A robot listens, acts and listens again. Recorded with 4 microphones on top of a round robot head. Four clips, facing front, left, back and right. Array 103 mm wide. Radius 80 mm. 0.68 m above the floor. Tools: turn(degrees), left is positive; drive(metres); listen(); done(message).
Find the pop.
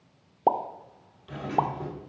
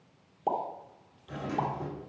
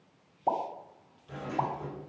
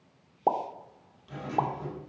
turn(degrees=-25)
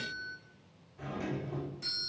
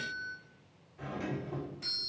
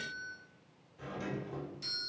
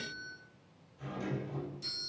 done("I heard a pop from this way, but can't make it out now.")